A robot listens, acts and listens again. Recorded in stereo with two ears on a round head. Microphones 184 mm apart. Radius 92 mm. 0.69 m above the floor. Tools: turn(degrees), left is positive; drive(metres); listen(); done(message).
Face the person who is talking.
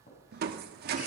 listen()
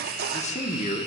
turn(degrees=35)
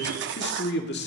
turn(degrees=100)
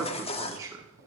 turn(degrees=-20)
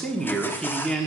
done("Facing the man speaking.")